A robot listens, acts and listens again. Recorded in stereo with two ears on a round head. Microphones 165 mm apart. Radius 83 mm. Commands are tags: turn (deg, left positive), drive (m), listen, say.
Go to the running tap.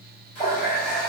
<turn deg="45"/>
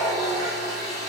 <drive m="1.0"/>
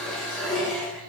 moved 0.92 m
<drive m="1.0"/>
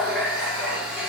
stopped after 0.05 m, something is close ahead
<say>Arrived at the running tap, straight ahead.</say>